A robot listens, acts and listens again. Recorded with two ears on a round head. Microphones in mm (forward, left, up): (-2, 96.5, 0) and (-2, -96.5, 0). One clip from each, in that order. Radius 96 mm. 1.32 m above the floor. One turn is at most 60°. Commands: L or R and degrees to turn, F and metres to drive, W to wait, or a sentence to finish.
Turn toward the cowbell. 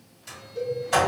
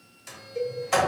R60
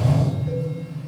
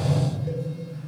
W
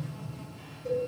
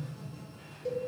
R50
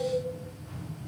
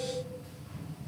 W
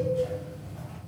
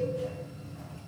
W
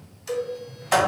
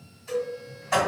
Found it: a cowbell, straight ahead.